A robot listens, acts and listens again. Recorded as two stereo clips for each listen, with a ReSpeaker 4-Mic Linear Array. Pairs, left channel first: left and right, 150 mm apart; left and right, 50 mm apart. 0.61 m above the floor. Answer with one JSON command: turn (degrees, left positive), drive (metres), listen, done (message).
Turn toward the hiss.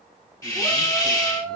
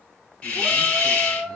{"turn": 25}
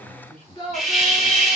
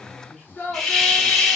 {"done": "Facing the hiss."}